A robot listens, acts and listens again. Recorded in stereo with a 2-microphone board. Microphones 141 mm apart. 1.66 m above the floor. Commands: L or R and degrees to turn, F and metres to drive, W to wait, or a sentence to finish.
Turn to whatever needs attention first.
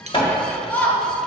L30
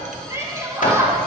R20
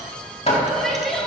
Facing the shout, 1 to 2 m away.